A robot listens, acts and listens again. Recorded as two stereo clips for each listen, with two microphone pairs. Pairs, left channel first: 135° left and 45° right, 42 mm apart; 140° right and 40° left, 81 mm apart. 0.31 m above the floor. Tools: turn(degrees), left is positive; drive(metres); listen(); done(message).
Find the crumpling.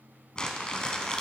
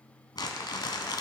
turn(degrees=-165)
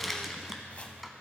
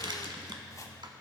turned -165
turn(degrees=40)
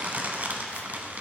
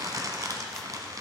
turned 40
done("Facing the crumpling, under 1 m away.")